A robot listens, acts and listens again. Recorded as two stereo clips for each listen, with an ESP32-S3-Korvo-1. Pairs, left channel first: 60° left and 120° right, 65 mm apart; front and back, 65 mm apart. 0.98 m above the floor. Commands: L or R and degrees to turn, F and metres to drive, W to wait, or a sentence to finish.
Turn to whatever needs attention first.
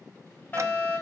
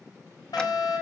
Found it: a fire alarm, straight ahead, over 4 m away.